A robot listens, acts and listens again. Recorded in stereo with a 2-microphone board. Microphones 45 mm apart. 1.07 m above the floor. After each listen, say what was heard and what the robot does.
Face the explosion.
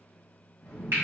The explosion: about 55° left or 125° left. Turn 55° left.
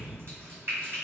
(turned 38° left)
So it is at 40° left. Turn 40° left.
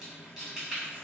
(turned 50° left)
Nothing new. It was at 10° right. Turn 10° right.
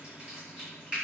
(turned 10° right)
I heard an explosion from this way, but can't make it out now.